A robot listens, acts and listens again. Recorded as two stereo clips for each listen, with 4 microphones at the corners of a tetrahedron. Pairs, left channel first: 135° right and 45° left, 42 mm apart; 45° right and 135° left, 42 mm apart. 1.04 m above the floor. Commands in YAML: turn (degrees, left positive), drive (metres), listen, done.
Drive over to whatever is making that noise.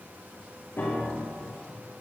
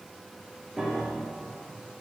turn: -150
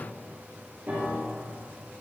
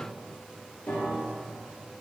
drive: 1.0
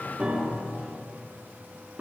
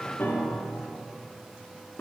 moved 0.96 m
turn: -10
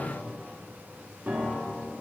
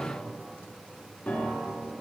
drive: 1.0
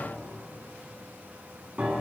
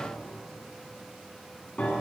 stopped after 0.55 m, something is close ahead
done: "Arrived at the piano, straight ahead."